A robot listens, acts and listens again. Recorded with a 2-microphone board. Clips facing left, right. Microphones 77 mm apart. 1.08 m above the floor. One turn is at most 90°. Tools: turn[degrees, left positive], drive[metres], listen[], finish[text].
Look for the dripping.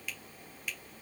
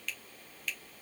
Action: listen[]
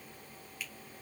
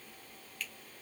Action: listen[]
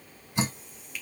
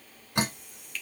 Thought: The dripping: about 65° right or 115° right.
Action: turn[-65]
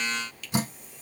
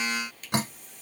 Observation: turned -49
Thought: So it is at 65° right.
Action: turn[-65]
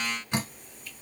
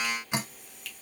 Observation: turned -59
Thought: The dripping is now 10° right.
Action: turn[-10]
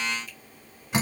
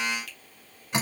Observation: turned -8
Action: finish[Facing the dripping.]